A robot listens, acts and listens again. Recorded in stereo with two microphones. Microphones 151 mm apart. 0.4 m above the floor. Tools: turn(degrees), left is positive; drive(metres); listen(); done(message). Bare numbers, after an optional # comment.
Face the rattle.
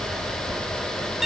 listen()
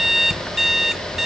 listen()
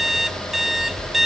done("I can't make out a rattle, only an alarm clock.")